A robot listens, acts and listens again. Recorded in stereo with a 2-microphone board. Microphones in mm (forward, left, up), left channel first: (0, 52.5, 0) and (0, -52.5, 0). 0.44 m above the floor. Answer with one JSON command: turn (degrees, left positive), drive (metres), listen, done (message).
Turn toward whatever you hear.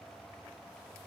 {"listen": true}
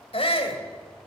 {"turn": 60}
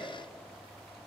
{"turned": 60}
{"listen": true}
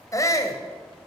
{"turn": 35}
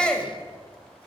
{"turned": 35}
{"turn": 10}
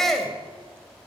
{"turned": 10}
{"done": "Found it: a shout, straight ahead."}